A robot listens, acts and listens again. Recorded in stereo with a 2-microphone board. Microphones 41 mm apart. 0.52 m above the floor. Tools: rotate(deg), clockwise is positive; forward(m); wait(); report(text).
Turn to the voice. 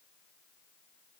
wait()
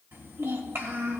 rotate(65)
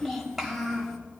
report("Found it: a child speaking, straight ahead, 2 to 4 m away.")